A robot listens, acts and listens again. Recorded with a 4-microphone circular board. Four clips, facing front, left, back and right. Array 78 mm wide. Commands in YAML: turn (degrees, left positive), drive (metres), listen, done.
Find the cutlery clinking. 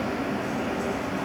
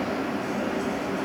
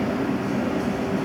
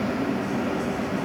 listen: true
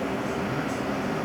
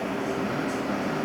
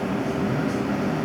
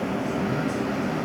listen: true
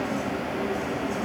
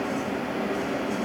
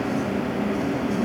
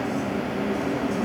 done: "I can't make out cutlery clinking."